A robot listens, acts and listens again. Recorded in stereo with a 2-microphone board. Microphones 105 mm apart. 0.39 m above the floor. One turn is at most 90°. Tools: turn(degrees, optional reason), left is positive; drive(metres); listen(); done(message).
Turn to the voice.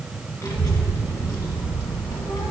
turn(degrees=35, reason="The child speaking: about 35° left or 145° left.")
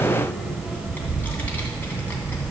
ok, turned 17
turn(degrees=15, reason="So it is at 15° left.")
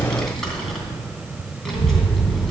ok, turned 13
done("Found it: a child speaking, straight ahead.")